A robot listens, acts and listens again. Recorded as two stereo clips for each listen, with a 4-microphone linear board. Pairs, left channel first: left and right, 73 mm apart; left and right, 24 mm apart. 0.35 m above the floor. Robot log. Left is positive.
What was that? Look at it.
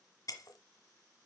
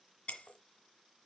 note: The breaking glass: about 55° left or 125° left.
cmd yaw +55
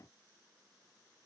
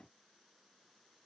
cmd idle
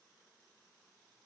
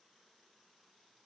end: I heard breaking glass, but can't make it out now. It was about straight ahead or 70° left.